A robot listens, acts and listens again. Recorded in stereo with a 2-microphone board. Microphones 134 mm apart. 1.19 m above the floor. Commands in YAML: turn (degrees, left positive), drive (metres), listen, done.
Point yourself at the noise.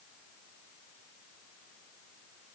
listen: true
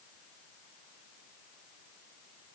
listen: true
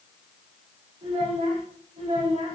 turn: -60
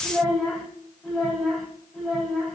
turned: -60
done: "Facing the child speaking."